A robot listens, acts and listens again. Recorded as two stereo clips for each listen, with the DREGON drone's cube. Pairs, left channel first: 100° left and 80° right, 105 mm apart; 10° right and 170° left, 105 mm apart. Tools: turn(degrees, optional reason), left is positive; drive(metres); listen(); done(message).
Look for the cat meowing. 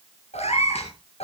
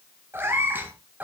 turn(degrees=95, reason="The cat meowing: 95° left.")
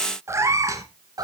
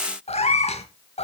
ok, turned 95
turn(degrees=-25, reason="The cat meowing is now 25° right.")
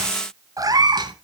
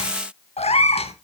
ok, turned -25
turn(degrees=-30, reason="The cat meowing is now 30° right.")
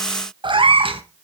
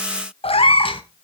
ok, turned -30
turn(degrees=-50, reason="The cat meowing is now 50° right.")
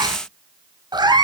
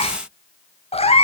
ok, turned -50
turn(degrees=-30, reason="The cat meowing is now 30° right.")
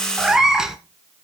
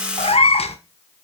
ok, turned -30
done("Facing the cat meowing.")